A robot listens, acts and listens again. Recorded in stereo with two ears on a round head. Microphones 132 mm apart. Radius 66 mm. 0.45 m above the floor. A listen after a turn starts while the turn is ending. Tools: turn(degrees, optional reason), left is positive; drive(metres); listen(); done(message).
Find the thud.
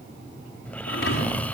turn(degrees=90)
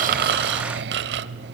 done("I heard a thud from this way, but can't make it out now.")